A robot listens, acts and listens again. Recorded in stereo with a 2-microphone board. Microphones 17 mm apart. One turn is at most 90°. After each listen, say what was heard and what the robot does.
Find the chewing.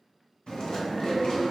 The chewing: about 70° left or 110° left. Turn 70° left.
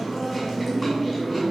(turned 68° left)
Facing the chewing, 1 to 2 m away.